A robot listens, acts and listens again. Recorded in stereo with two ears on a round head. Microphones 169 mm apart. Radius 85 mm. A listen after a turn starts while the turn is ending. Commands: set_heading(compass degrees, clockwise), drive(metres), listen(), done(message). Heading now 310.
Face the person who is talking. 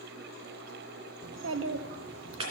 set_heading(25)
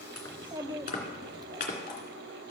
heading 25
set_heading(45)
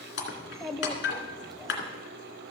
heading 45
done("Found it: a child speaking, straight ahead.")